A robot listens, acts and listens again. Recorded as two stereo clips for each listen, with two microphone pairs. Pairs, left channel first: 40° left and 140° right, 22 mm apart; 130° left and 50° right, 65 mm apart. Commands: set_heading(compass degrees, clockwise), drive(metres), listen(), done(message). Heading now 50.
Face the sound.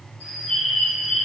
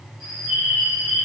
set_heading(355)
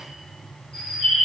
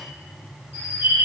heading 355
done("Found it: a bird, straight ahead.")